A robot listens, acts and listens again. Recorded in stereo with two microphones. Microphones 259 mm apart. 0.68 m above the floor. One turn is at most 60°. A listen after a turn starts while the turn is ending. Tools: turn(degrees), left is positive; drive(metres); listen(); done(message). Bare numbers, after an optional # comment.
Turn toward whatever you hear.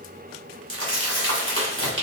# The crumpling: about 50° right or 130° right.
turn(-50)
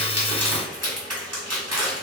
# So it is at 80° right.
turn(-60)
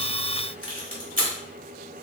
# The crumpling is now 35° right.
turn(-35)
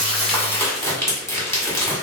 # The crumpling is now 10° left.
turn(10)
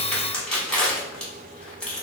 done("Facing the crumpling, 1 to 2 m away.")